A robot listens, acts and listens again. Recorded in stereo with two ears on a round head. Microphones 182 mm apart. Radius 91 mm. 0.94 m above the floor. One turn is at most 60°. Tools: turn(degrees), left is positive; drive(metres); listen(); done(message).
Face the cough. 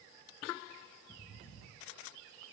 listen()
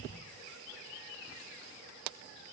listen()
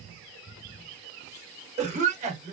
turn(degrees=-35)
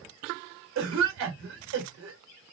turn(degrees=-60)
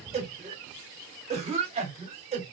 turn(degrees=-30)
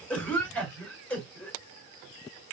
done("Facing the cough, 1 to 2 m away.")